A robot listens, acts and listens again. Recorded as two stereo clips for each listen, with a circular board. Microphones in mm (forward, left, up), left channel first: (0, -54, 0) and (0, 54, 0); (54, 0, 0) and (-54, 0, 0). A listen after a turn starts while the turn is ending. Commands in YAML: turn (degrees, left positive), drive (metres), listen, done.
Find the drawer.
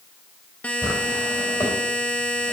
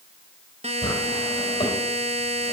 turn: -35
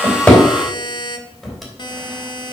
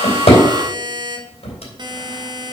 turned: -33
listen: true
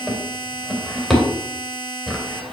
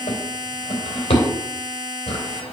done: "Facing the drawer."